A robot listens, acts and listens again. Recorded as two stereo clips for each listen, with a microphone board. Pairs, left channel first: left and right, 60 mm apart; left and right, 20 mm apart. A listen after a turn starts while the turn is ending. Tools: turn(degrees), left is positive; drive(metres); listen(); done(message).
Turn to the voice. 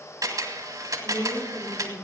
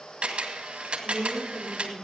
turn(degrees=50)
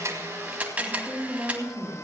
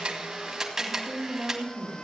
done("Facing the woman speaking, 2 to 4 m away.")